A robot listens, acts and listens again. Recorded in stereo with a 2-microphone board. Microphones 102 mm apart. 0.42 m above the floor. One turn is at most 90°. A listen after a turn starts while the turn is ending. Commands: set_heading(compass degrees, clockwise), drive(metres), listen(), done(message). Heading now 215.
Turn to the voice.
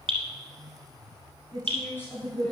set_heading(195)
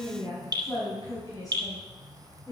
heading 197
set_heading(162)
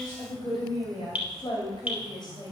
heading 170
set_heading(80)
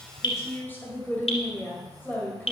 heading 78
set_heading(58)
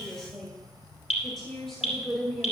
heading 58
done("Facing the woman speaking, 2 to 4 m away.")